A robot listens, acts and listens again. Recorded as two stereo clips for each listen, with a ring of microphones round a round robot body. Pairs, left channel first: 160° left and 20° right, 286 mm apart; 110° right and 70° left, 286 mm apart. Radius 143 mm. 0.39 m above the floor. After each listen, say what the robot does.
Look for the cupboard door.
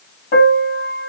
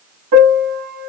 Keep listening.
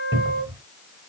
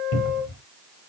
Turn 100° right.
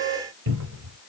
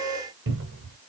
Turn 20° left.
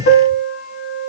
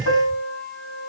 Found it: a cupboard door, straight ahead.